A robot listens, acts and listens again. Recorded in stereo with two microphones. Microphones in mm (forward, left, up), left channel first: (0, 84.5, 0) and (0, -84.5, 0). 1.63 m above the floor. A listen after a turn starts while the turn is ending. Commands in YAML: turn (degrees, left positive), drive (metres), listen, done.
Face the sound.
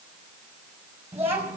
turn: -30
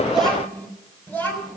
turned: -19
turn: 10
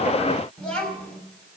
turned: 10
done: "Facing the child speaking."